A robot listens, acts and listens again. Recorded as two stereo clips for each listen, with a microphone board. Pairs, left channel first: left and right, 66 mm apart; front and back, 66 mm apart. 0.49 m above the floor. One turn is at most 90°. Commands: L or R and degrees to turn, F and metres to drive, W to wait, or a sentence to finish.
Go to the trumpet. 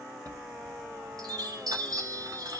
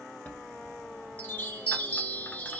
W
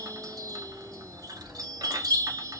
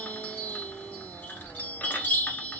W
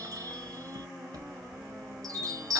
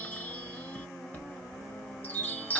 I can't make out a trumpet to turn to.